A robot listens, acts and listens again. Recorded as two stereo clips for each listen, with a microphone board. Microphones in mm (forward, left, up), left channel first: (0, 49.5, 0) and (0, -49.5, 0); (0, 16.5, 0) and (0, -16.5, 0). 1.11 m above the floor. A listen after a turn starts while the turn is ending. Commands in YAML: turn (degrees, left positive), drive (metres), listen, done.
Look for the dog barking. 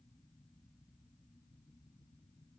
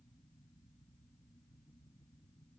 listen: true
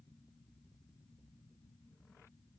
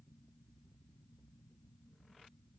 listen: true
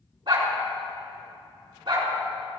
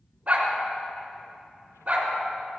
turn: -55
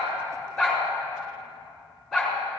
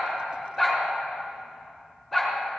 done: "Found it: a dog barking, straight ahead."